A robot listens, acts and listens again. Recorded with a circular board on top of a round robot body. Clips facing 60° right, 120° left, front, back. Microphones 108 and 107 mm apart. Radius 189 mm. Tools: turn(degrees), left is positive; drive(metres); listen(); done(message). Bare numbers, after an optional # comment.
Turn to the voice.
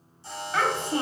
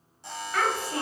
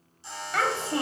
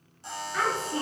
# The child speaking: 10° left.
turn(10)
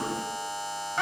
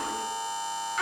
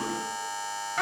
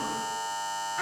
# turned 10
done("Found it: a child speaking, straight ahead, 1 to 2 m away.")